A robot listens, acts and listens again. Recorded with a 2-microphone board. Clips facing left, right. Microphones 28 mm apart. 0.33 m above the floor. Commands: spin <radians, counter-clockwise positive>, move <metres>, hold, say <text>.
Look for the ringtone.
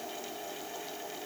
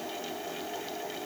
hold
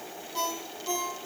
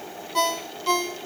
spin -1.13
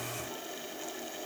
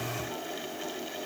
hold
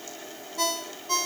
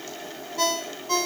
spin -0.17
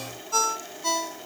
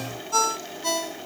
say Facing the ringtone.